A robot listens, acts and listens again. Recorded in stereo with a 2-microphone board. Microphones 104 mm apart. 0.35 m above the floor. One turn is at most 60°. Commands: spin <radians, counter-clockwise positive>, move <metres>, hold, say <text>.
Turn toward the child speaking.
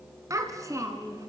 spin -0.52
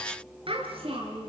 spin -1.05
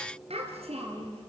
spin -1.05
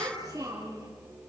spin -0.61
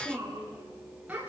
spin -0.26
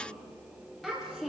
say Facing the child speaking, over 4 m away.